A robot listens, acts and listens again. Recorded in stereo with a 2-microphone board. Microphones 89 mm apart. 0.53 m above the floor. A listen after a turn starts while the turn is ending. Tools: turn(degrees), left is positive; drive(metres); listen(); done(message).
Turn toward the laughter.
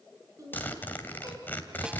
turn(degrees=-40)
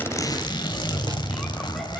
listen()
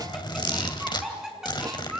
turn(degrees=-10)
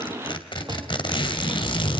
listen()
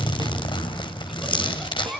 done("Facing the laughter.")